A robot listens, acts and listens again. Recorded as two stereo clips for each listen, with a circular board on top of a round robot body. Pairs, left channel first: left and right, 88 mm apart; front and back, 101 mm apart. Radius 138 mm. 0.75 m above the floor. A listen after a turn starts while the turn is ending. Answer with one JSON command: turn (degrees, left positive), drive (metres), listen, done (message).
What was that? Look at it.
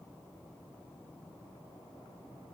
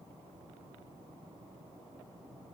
{"listen": true}
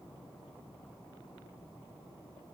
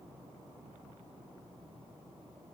{"listen": true}
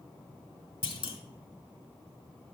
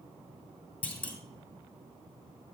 {"turn": 75}
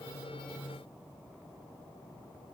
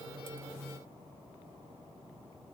{"done": "Facing where the clunk came from. I can't hear it now."}